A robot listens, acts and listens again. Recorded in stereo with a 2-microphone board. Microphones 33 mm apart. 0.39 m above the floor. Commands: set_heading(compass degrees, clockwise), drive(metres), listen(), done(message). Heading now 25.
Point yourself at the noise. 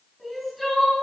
set_heading(355)
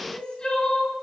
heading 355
set_heading(200)
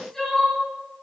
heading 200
set_heading(190)
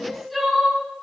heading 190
done("Facing the crying, over 4 m away.")